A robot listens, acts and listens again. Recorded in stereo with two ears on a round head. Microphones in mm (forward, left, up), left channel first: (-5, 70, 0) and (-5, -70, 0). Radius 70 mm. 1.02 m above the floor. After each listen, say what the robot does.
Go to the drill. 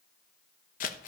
Keep listening.
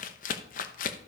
Keep listening.
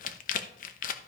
I can't make out a drill to turn to.